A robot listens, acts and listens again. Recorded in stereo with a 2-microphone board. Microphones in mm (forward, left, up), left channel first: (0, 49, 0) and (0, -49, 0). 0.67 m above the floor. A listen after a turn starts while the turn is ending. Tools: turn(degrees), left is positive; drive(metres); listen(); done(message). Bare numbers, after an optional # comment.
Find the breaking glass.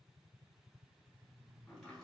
listen()
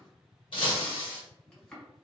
# The breaking glass: about 60° left or 120° left.
turn(60)
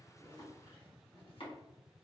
listen()
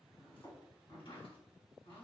done("I heard breaking glass, but can't make it out now. It was about straight ahead or 60° left.")